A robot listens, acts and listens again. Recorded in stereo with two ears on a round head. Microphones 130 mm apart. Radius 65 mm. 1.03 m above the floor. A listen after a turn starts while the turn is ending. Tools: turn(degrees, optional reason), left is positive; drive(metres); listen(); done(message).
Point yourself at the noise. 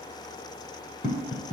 turn(degrees=55, reason="The tapping: about 55° left or 125° left.")
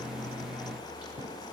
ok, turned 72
listen()
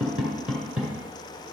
done("Facing the tapping, 1 to 2 m away.")